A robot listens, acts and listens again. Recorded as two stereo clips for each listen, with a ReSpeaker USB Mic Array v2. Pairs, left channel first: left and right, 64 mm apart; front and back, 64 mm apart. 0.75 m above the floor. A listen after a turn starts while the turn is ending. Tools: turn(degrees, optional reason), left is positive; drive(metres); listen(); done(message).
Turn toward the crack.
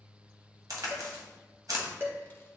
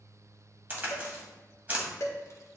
turn(degrees=-120, reason="The crack: 120° right.")
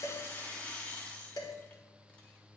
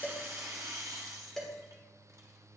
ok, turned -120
done("Facing where the crack came from. I can't hear it now.")